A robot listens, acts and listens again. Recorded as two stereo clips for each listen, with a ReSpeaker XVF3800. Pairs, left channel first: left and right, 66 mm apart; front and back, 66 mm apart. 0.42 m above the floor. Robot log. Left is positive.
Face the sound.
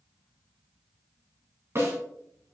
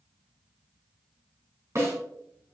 note: The snare drum: 140° right.
cmd yaw -140
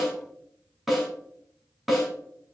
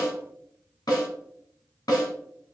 end: Found it: a snare drum, straight ahead.